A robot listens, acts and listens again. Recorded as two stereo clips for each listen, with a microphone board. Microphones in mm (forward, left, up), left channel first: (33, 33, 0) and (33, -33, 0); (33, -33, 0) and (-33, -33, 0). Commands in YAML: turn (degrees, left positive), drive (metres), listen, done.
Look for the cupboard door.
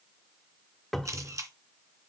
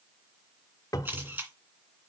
done: "Facing the cupboard door, 1 to 2 m away."